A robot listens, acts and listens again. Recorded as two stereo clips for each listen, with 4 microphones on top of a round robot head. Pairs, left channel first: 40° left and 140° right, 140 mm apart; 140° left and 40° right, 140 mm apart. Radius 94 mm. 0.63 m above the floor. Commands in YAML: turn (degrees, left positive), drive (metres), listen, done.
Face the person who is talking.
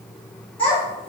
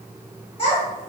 turn: 90
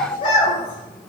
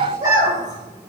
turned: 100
turn: -10
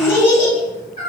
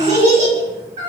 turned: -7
done: "Facing the child speaking."